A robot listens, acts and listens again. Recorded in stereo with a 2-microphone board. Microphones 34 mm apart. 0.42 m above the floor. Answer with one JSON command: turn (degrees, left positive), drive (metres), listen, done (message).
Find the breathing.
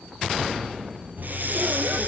{"turn": -60}
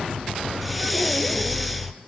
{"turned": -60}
{"done": "Found it: breathing, straight ahead."}